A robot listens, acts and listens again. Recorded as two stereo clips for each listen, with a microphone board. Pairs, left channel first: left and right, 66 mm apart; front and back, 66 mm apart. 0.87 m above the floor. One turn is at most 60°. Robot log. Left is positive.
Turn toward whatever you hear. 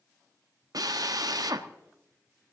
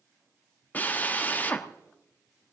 note: The drill: 65° right.
cmd yaw -60
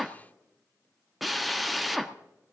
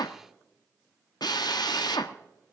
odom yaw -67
end: Found it: a drill, straight ahead.